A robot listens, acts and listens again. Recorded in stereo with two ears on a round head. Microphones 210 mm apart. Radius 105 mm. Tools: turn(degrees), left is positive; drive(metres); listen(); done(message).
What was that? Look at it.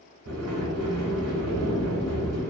turn(degrees=-70)
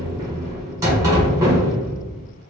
turn(degrees=-15)
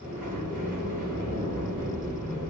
done("Facing the sliding door, 1 to 2 m away.")